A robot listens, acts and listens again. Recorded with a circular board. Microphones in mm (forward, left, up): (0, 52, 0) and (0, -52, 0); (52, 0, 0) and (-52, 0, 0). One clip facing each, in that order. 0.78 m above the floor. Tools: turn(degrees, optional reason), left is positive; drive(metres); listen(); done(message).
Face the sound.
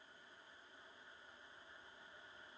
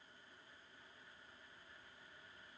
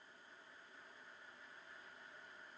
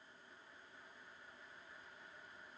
listen()
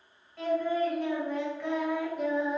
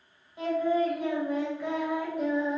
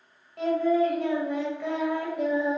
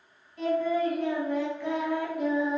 done("Facing the singing, 2 to 4 m away.")